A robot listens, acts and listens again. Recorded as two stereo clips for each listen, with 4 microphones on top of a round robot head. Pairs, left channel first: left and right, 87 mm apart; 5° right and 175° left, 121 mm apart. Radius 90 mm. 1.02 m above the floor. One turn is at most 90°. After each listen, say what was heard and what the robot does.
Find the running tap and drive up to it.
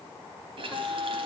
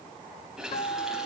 The running tap: 95° right. Turn 90° right.
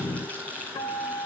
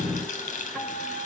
The running tap is now 10° left. Turn 10° left.
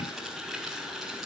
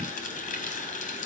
Drive 1.0 m forward.
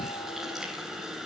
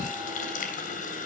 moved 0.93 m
Drive 1.0 m forward.
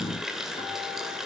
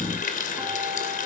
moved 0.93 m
Drive 1.0 m forward.
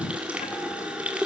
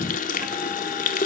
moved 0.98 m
The running tap is now 10° right. Turn 10° right.
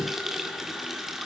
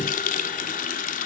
Drive 1.0 m forward.
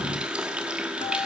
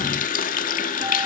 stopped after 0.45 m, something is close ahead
The running tap is now 10° right. Turn 10° right.
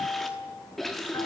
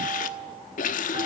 Arrived at the running tap, straight ahead.